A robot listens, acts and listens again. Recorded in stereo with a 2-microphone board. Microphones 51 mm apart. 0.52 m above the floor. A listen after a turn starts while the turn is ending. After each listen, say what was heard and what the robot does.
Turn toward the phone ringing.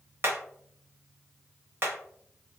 Keep listening.
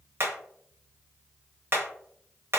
Keep listening.
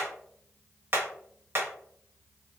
I can't make out a phone ringing, only hammering.